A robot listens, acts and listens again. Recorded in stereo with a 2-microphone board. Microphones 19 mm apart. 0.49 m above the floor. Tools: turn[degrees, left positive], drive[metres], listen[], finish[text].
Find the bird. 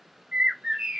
Thought: The bird: about 75° right or 105° right.
Action: turn[-75]
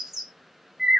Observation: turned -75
Thought: So it is at 25° right.
Action: turn[-25]
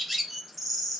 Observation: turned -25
Action: finish[Facing the bird.]